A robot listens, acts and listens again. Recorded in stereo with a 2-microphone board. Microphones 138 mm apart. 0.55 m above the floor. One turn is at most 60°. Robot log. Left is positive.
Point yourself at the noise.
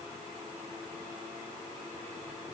cmd idle
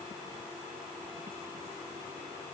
cmd idle
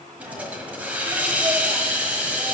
cmd yaw -30
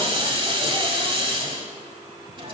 note: So it is at 140° right.
cmd yaw -60
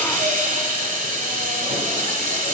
note: The hiss is now 80° right.
cmd yaw -60
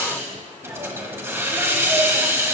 note: The hiss is now 20° right.
cmd yaw -20
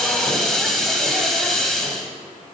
end: Found it: a hiss, straight ahead.